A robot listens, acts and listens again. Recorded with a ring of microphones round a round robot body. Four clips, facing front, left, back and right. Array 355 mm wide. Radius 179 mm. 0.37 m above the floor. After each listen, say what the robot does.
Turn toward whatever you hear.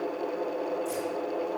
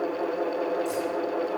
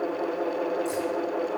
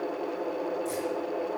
Turn 165° right.
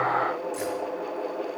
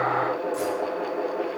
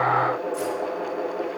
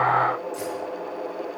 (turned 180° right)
Turn 20° left.
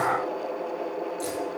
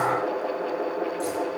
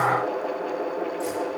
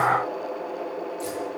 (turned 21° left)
Found it: keys jangling, straight ahead.